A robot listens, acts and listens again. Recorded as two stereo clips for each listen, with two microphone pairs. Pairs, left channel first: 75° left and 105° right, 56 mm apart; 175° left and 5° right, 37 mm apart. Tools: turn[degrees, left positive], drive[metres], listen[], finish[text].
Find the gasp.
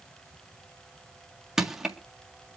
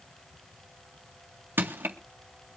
Action: listen[]
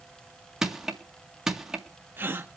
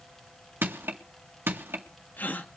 Thought: The gasp: 150° right.
Action: turn[-150]
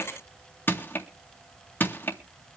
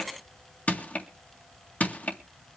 Action: finish[I heard a gasp from this way, but can't make it out now.]